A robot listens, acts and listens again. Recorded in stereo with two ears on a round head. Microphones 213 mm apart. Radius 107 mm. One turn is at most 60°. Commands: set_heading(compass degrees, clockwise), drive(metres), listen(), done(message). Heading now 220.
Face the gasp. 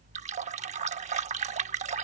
listen()
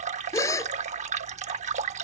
set_heading(190)
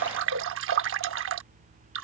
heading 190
listen()
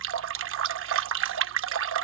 done("I heard a gasp, but can't make it out now. It was about 15° right or 135° left.")